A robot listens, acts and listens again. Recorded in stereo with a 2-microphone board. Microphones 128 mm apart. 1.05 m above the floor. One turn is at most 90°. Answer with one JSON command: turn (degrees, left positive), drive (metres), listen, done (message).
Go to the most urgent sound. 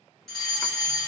{"turn": 30}
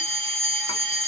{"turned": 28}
{"turn": -30}
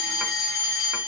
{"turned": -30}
{"drive": 1.0}
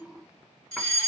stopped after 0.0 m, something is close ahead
{"done": "Something is in my way. I am facing the fire alarm but have not reached it."}